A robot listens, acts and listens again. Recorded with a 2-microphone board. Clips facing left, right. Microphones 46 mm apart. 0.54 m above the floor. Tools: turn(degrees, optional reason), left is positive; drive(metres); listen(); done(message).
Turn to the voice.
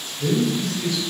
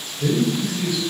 turn(degrees=-30)
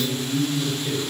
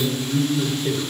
turn(degrees=-135, reason="So it is at 135° right.")
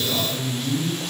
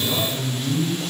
turn(degrees=-25, reason="The man speaking is now 25° right.")
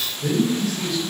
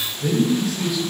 done("Facing the man speaking, 2 to 4 m away.")